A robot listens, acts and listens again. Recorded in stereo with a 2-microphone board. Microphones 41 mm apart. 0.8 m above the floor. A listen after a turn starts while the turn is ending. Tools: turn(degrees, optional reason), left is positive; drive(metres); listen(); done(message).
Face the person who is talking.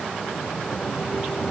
listen()
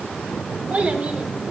turn(degrees=-40, reason="The child speaking: about 40° right or 140° right.")
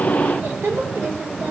turn(degrees=-100, reason="So it is at 100° right.")
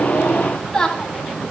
turn(degrees=10, reason="The child speaking is now 10° left.")
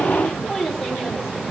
done("Facing the child speaking.")